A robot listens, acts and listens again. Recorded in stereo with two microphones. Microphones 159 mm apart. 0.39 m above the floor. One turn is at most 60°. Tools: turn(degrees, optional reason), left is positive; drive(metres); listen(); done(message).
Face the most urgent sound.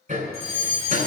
turn(degrees=-40, reason="The fire alarm: about 40° right or 140° right.")
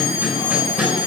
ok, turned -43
turn(degrees=-60, reason="So it is at 95° right.")
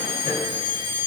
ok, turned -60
turn(degrees=-35, reason="The fire alarm is now 35° right.")
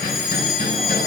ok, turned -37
done("Found it: a fire alarm, straight ahead.")